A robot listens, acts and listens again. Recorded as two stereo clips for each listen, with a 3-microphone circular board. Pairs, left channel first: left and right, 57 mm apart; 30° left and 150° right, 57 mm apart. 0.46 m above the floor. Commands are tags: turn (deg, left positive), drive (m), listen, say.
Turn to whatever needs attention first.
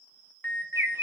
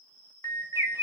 <turn deg="40"/>
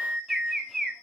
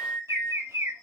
<turn deg="-20"/>
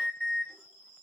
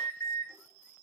<say>Found it: an alarm, straight ahead, 2 to 4 m away.</say>